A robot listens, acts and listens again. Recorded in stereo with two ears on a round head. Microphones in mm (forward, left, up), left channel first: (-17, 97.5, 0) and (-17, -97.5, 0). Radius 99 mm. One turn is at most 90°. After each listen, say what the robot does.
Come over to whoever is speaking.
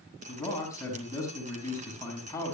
Turn 30° left.
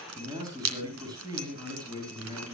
Turn 20° right.
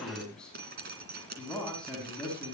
Drive 1.0 m forward.
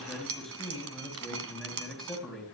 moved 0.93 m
Drive 1.0 m forward.
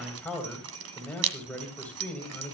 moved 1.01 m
Drive 1.0 m forward.
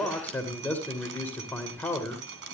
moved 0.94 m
Turn 10° left.
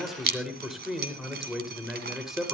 Drive 1.0 m forward.
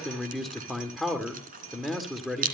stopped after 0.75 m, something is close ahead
Arrived at the man speaking, straight ahead.